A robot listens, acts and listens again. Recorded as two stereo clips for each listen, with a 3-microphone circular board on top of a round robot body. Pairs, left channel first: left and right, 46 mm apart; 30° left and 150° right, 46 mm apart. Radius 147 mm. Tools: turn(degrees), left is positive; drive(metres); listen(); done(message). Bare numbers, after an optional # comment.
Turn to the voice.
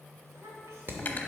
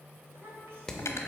# The child speaking: 115° right.
turn(-115)
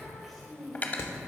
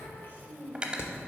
done("Found it: a child speaking, straight ahead, 2 to 4 m away.")